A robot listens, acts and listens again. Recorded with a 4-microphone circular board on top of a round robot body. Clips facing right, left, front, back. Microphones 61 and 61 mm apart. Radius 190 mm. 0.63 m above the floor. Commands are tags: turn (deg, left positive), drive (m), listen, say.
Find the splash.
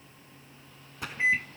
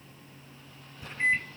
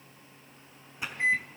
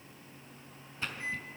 <turn deg="-80"/>
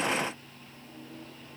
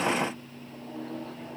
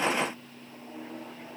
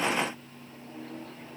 <say>I heard a splash from this way, but can't make it out now.</say>